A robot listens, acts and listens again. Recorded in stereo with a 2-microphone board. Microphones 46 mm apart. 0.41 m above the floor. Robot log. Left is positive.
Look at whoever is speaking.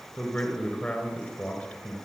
note: The man speaking: about 25° left or 155° left.
cmd yaw +25
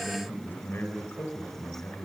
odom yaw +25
note: So it is at 135° left.
cmd yaw +135
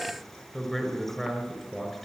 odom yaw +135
end: Facing the man speaking, over 4 m away.